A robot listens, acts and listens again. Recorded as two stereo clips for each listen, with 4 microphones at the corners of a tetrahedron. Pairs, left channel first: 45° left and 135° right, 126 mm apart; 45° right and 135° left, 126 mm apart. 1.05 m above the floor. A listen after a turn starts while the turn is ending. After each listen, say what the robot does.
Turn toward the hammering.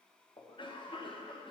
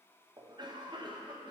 Keep listening.
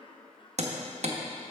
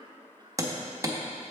Turn 160° right.
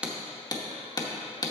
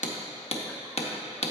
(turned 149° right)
Turn 15° right.
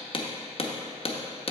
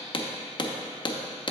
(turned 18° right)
Found it: hammering, straight ahead.